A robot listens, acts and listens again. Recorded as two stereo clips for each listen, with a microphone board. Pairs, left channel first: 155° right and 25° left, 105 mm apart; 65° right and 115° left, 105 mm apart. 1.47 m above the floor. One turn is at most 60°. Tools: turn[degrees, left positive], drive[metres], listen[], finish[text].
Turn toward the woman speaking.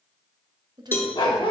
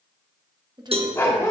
Thought: The woman speaking: 70° left.
Action: turn[60]
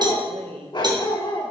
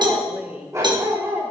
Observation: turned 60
Thought: The woman speaking is now 40° left.
Action: turn[40]
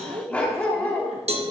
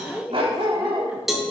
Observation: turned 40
Thought: The woman speaking is now 25° left.
Action: turn[25]
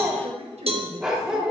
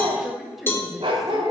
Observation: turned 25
Thought: The woman speaking is now 25° left.
Action: turn[25]
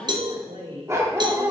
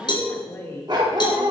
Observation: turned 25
Action: finish[Found it: a woman speaking, straight ahead, 1 to 2 m away.]